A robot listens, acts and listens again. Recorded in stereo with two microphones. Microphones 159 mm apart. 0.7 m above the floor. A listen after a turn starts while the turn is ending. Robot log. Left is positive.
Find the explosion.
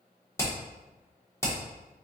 cmd idle
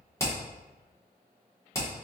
cmd idle
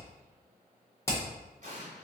note: The explosion: about 50° right or 130° right.
cmd yaw -50
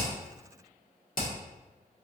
cmd idle
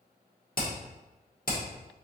end: I heard an explosion, but can't make it out now. It was about straight ahead or 80° right.